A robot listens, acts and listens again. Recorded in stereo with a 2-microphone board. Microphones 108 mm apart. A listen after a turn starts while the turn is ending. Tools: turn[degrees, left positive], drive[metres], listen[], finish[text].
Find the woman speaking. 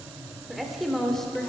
Action: turn[30]
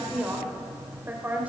Thought: So it is at 15° right.
Action: turn[-15]
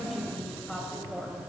Action: finish[Facing the woman speaking.]